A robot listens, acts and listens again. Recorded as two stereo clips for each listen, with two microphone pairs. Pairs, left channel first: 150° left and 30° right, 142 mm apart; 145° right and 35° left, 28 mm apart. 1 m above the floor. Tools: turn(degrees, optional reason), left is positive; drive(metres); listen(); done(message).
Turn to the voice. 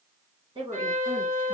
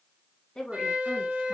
turn(degrees=-80, reason="The woman speaking: 80° right.")
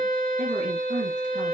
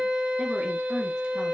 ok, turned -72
turn(degrees=-10, reason="Nothing new. It was at 10° right.")
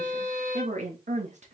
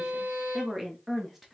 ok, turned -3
turn(degrees=-50, reason="The woman speaking is now 50° right.")
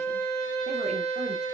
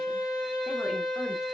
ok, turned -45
listen()
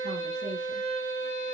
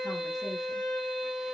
listen()
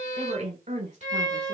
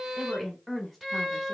turn(degrees=-45, reason="The woman speaking is now 45° right.")
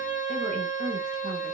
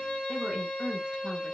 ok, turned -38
listen()
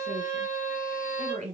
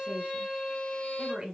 done("Facing the woman speaking, 1 to 2 m away.")